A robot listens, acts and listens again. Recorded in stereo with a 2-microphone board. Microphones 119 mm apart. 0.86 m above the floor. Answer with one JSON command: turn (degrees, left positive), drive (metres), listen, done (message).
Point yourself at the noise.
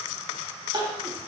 {"turn": -35}
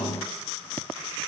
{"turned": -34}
{"listen": true}
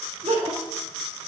{"turn": -105}
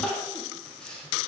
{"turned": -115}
{"turn": 10}
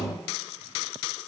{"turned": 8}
{"listen": true}
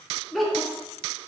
{"done": "Facing the crying."}